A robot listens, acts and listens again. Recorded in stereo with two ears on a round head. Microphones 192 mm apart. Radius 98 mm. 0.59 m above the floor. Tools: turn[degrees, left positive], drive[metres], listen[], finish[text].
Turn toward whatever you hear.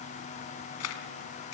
Action: turn[90]
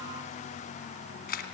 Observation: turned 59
Thought: So it is at 40° left.
Action: turn[40]
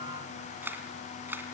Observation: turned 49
Thought: The camera shutter is now 10° right.
Action: turn[-10]
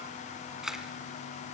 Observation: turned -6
Action: finish[Found it: a camera shutter, straight ahead.]